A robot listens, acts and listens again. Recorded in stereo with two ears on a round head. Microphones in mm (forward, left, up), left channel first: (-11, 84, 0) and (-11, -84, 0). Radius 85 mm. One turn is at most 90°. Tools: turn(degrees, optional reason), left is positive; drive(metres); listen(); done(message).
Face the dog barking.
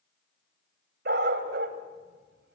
turn(degrees=-60, reason="The dog barking: about 60° right or 120° right.")
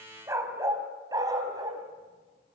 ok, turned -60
turn(degrees=-20, reason="So it is at 20° right.")
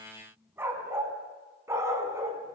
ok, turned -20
turn(degrees=-15, reason="The dog barking is now 15° right.")
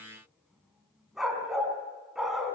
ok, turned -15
done("Facing the dog barking, over 4 m away.")